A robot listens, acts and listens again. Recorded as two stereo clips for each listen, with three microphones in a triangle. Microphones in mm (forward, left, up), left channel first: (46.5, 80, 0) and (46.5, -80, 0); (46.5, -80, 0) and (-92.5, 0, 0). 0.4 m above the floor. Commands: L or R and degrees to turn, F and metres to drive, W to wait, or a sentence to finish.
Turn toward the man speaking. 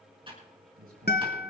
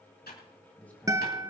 R110
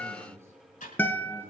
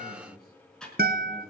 R15
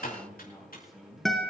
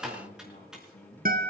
Found it: a man speaking, straight ahead.